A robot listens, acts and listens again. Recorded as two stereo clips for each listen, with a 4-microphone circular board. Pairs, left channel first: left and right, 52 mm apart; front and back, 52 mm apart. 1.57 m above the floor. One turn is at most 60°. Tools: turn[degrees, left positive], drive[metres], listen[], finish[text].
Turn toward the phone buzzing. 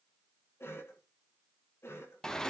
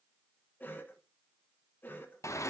Action: listen[]
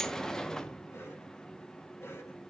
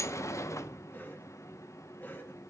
Action: listen[]
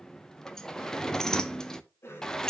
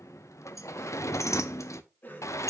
Action: finish[I can't make out a phone buzzing, only a cough and a sliding door.]